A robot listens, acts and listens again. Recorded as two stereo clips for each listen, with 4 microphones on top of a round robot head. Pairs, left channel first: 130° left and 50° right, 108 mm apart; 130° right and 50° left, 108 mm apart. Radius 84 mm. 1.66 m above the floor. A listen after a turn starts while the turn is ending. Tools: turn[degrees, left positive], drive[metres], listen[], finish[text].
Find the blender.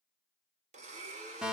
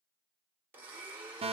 Thought: The blender: 25° right.
Action: turn[-25]
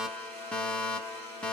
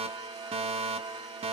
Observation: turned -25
Action: listen[]
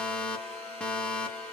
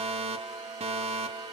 Action: listen[]
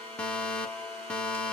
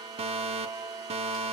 Action: finish[I heard a blender from this way, but can't make it out now.]